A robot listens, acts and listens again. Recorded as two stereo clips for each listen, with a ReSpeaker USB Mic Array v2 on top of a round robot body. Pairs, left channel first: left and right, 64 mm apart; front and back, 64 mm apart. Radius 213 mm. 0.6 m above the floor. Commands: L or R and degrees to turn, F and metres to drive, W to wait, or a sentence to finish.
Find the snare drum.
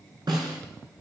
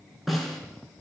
R90
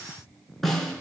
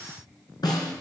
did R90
Facing the snare drum, 2 to 4 m away.